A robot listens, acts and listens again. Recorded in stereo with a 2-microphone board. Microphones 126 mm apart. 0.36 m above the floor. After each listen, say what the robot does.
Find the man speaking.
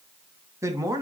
Turn 25° right.
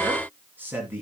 Turn 15° right.
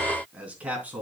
Turn 30° right.
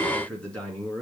Turn 10° left.
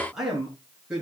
Found it: a man speaking, straight ahead.